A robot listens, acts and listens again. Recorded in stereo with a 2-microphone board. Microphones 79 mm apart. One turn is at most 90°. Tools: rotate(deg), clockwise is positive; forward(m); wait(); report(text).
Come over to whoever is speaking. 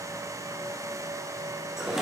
wait()
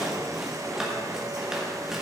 wait()
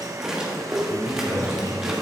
rotate(40)
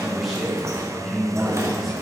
forward(1.0)
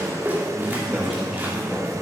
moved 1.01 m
forward(1.0)
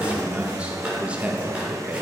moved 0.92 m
rotate(20)
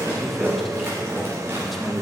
forward(1.0)
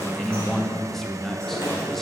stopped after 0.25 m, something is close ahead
report("I am next to the man speaking.")